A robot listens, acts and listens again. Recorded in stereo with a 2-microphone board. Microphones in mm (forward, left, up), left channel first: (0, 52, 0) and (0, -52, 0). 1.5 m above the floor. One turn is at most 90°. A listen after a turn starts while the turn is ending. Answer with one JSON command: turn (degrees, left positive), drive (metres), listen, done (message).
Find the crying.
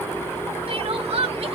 {"turn": -70}
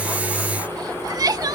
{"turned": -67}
{"turn": -40}
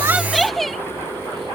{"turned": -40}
{"done": "Found it: crying, straight ahead."}